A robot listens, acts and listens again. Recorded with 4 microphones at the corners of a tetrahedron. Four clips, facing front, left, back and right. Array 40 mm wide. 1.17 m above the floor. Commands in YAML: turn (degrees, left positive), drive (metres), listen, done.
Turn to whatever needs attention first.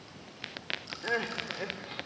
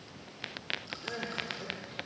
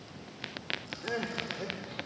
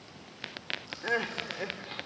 turn: -55
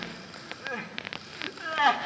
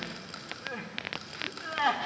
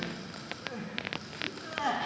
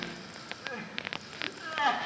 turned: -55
done: "Facing the crying, 1 to 2 m away."